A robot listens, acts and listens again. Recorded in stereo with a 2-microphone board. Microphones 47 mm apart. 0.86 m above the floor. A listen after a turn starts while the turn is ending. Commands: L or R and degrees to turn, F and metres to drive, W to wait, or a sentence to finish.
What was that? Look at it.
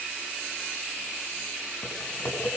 L65
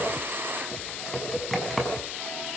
Facing the typing on a keyboard, over 4 m away.